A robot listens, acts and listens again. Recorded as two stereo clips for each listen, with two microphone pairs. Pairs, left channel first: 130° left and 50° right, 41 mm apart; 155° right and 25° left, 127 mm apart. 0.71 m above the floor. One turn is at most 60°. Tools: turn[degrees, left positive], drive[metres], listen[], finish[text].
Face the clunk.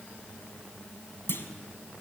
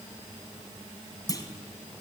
Thought: The clunk: 145° left.
Action: turn[60]
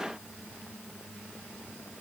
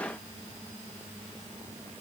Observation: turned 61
Thought: Nothing new. It was at 85° left.
Action: turn[60]
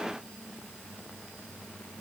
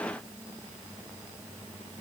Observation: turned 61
Thought: Nothing new. It was at 25° left.
Action: turn[25]
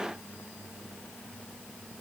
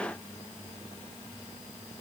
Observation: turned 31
Action: finish[Facing where the clunk came from. I can't hear it now.]